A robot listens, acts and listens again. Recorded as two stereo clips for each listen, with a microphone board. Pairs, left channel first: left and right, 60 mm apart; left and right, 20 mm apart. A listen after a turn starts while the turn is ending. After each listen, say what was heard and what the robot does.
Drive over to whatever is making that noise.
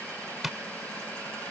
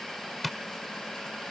Turn 30° right.
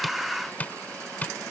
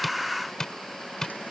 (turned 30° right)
So it is at 25° left. Turn 25° left.
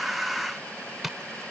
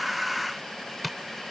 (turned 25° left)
Drive 1.0 m forward.
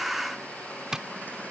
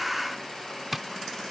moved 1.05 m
The tapping is now 10° right. Turn 10° right.
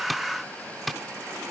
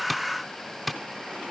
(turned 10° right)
Drive 1.0 m forward.
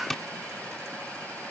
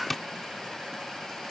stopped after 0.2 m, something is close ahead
Blocked. The tapping is further on, straight ahead.